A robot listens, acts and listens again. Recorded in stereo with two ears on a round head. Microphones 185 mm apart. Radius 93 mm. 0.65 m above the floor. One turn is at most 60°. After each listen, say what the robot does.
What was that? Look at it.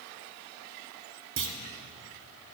Turn 60° right.
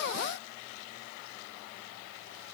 Keep listening.
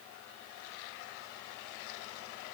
I heard a clunk, but can't make it out now. It was about 5° right or 55° right.